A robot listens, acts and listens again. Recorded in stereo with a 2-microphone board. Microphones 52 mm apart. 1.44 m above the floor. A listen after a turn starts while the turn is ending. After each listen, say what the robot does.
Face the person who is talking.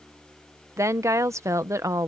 Turn 70° right.
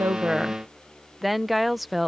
Facing the woman speaking.